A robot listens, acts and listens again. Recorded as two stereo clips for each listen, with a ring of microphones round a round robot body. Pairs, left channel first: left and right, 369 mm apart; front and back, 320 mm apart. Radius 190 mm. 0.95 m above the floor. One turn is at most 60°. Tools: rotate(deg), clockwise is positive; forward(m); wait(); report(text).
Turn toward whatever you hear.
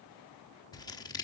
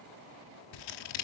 rotate(-10)
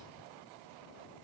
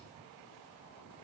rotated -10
wait()
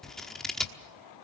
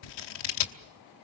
report("Found it: scissors, straight ahead, 1 to 2 m away.")